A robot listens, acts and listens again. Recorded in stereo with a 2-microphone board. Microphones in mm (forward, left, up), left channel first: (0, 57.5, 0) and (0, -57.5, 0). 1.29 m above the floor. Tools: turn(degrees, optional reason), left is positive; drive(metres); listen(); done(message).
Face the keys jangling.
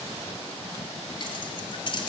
turn(degrees=45, reason="The keys jangling: about 45° left or 135° left.")
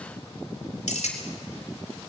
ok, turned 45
turn(degrees=85, reason="So it is at 85° left.")
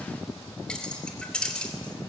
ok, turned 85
turn(degrees=10, reason="The keys jangling is now 10° left.")
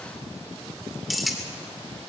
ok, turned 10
done("Facing the keys jangling.")